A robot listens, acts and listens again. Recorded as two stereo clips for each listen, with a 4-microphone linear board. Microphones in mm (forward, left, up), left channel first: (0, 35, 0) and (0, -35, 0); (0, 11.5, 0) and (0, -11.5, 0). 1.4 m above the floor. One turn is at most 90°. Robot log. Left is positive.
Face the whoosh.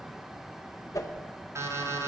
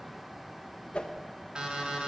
note: The whoosh: about 50° left or 130° left.
cmd yaw +50
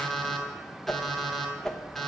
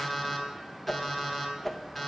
note: So it is at 10° left.
cmd yaw +10
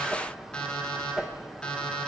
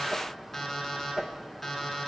end: Facing the whoosh.